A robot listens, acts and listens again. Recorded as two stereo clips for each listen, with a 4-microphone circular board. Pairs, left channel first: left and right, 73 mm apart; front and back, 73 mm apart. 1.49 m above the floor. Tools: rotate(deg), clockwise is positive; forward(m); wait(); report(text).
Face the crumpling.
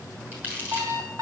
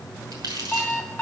rotate(155)
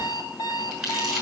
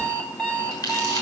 report("Facing the crumpling, over 4 m away.")